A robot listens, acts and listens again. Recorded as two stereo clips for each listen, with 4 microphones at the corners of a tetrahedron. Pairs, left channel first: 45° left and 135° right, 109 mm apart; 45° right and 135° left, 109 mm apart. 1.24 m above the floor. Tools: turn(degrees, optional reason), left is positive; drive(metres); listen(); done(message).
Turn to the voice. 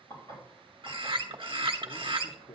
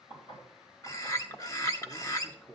turn(degrees=30, reason="The man speaking: 30° left.")
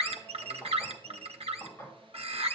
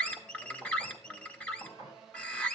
listen()
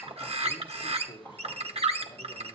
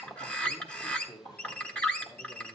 done("Found it: a man speaking, straight ahead.")